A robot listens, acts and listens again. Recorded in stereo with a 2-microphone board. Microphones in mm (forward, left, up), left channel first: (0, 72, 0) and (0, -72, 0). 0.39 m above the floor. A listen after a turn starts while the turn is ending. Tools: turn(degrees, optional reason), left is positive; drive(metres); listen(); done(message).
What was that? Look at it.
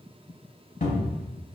turn(degrees=75, reason="The cupboard door: about 75° left or 105° left.")
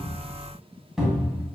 done("Facing the cupboard door.")